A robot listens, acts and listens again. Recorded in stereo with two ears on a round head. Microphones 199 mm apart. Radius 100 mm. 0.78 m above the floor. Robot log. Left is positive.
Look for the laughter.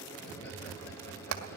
cmd idle
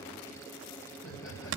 note: The laughter: about 55° left or 125° left.
cmd yaw +55
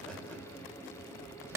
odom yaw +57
cmd idle
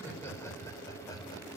note: So it is at 15° left.
cmd yaw +15
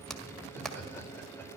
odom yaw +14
note: The laughter is now 10° left.
cmd yaw +10
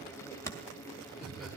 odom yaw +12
end: Found it: laughter, straight ahead, 2 to 4 m away.